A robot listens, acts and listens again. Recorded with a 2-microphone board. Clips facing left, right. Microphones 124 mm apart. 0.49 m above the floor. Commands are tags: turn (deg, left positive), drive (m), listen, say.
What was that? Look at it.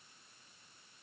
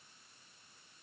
<listen/>
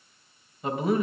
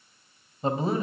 <turn deg="-30"/>
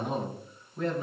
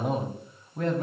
<turn deg="-120"/>
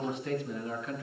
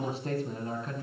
<turn deg="-35"/>
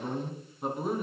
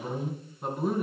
<say>Found it: a man speaking, straight ahead.</say>